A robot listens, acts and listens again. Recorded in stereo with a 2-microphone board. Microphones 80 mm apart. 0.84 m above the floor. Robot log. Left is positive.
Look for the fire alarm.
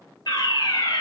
note: The fire alarm: about 60° left or 120° left.
cmd yaw +60
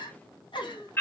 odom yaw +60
note: So it is at 35° left.
cmd yaw +35
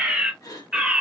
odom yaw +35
note: The fire alarm is now 10° right.
cmd yaw -10
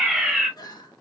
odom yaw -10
end: Found it: a fire alarm, straight ahead, 2 to 4 m away.